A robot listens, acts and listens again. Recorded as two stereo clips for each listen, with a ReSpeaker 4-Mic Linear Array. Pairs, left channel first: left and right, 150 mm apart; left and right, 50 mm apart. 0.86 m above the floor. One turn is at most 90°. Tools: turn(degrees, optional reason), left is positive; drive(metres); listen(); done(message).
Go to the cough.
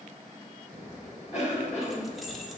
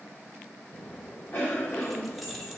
turn(degrees=50, reason="The cough: about 50° left or 130° left.")
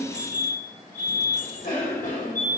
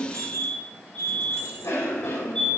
turn(degrees=75, reason="So it is at 75° left.")
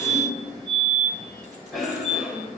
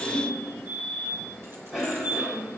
drive(metres=1.0)
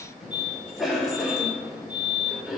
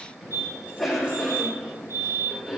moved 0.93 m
drive(metres=1.0)
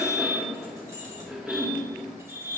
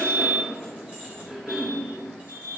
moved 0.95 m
drive(metres=1.0)
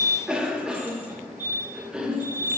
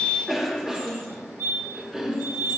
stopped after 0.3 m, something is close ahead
done("Arrived at the cough, straight ahead.")